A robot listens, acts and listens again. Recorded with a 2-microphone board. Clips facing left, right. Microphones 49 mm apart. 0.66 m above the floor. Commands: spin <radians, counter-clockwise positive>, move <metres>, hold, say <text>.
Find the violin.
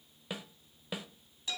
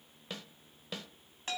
hold
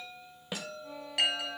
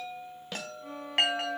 spin -1.05
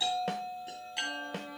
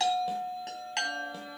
hold
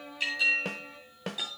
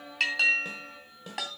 say Facing the violin, 1 to 2 m away.